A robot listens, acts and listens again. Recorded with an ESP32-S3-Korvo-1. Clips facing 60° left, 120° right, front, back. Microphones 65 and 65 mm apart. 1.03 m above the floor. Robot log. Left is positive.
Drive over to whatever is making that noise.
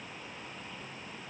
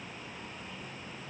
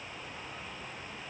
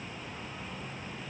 cmd idle
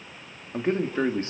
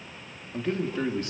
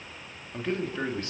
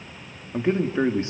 note: The man speaking: 115° left.
cmd yaw +115
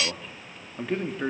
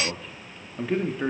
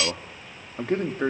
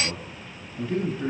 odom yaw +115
note: The man speaking is now 30° right.
cmd yaw -30
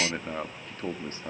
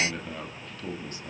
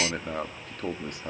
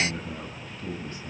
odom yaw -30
note: The man speaking is now 10° left.
cmd yaw +10
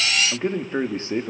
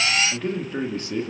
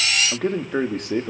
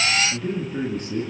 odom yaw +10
cmd fwd 1.0
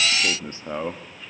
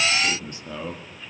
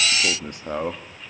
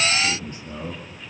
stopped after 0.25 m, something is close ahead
note: The man speaking is now 10° left.
cmd yaw +10
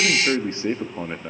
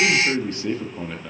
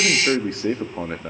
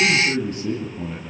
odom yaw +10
end: Something is in my way. I am facing the man speaking but have not reached it.